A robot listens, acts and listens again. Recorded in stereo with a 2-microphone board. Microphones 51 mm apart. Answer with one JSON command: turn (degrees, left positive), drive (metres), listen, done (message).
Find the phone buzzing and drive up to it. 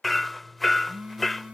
{"turn": -30}
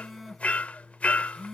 {"drive": 1.0}
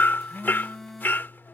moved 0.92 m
{"drive": 1.0}
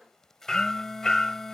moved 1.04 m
{"turn": 10}
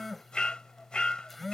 {"drive": 1.0}
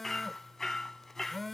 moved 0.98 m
{"drive": 1.0}
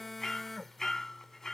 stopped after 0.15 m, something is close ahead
{"done": "Arrived at the phone buzzing, straight ahead."}